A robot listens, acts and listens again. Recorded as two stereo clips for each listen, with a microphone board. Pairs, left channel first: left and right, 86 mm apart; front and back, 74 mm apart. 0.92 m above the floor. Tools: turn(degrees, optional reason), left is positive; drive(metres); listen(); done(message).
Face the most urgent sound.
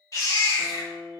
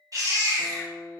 turn(degrees=145, reason="The baby crying: 145° left.")
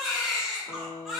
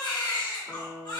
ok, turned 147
done("Facing the baby crying.")